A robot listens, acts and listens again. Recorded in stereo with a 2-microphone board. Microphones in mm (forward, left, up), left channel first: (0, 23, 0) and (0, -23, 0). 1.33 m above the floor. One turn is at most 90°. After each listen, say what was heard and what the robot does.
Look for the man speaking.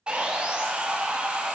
Keep listening.
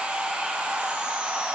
Keep listening.
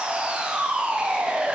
I can't make out a man speaking, only sawing.